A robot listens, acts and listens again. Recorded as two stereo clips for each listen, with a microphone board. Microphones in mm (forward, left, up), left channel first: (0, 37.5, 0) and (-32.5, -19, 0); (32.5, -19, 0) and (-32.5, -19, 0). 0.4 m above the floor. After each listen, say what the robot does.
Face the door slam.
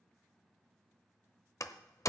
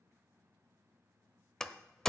Turn 80° left.
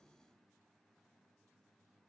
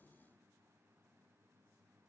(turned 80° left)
Facing where the door slam came from. I can't hear it now.